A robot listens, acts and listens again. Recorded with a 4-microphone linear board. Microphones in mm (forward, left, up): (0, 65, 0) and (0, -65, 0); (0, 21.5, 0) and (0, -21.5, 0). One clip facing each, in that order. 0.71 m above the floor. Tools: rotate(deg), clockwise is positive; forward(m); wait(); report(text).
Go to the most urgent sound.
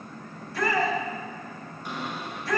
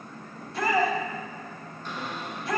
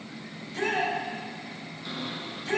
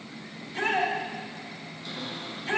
rotate(25)
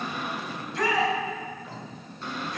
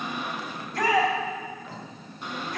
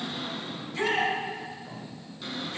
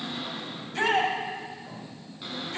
rotate(130)
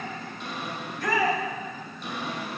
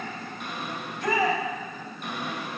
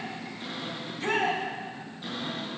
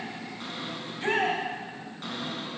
rotate(20)
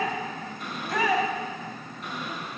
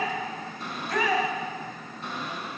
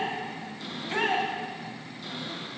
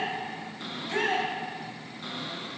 forward(1.0)
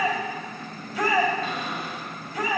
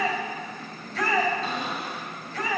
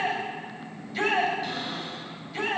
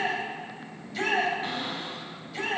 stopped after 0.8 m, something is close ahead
rotate(-10)
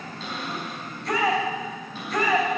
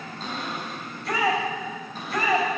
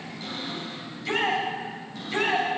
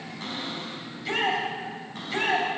report("Blocked. The shout is further on, straight ahead.")